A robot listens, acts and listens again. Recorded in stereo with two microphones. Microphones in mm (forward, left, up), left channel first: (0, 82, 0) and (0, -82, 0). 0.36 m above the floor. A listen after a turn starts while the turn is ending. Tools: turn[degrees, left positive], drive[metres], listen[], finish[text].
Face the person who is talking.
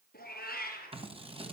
Action: listen[]
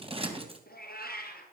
Action: listen[]
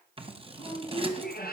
Thought: The woman speaking: about 25° left or 155° left.
Action: turn[25]
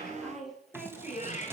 Action: finish[Found it: a woman speaking, straight ahead, over 4 m away.]